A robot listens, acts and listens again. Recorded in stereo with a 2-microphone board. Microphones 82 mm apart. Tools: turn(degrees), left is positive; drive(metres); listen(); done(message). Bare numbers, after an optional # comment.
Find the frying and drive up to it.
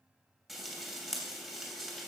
turn(-30)
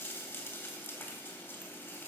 # So it is at 25° left.
turn(25)
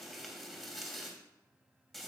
drive(1.0)
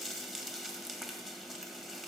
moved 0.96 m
drive(1.0)
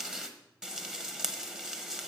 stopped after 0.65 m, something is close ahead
done("I am next to the frying.")